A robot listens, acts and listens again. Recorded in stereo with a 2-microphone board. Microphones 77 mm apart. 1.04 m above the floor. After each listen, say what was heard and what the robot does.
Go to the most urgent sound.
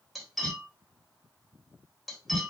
Keep listening.
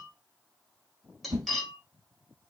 Keep listening.
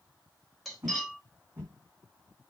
I can't make out anything urgent, only a whoosh and cutlery clinking.